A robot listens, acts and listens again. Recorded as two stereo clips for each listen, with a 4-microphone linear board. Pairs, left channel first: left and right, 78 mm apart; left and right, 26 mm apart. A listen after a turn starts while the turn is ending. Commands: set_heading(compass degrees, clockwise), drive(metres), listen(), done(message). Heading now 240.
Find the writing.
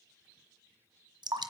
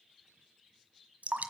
listen()
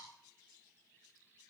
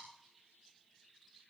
listen()
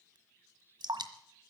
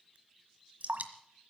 done("I can't make out writing, only dripping.")